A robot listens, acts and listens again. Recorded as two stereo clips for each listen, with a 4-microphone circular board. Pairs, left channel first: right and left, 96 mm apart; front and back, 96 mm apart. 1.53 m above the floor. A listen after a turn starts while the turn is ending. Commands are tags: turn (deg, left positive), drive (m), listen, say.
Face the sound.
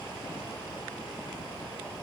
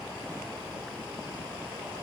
<listen/>
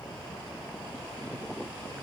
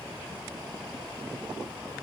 <listen/>
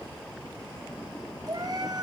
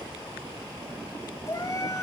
<turn deg="50"/>
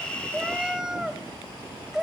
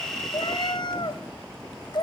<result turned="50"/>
<turn deg="10"/>
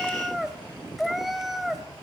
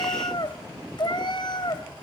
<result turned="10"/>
<say>Facing the cat meowing, 2 to 4 m away.</say>